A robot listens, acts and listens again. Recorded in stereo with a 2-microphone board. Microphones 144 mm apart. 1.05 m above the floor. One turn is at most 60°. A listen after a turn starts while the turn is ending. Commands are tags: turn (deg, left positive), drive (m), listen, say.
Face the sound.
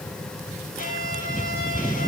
<turn deg="60"/>
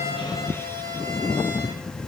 <turn deg="15"/>
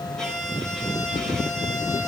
<say>Facing the violin.</say>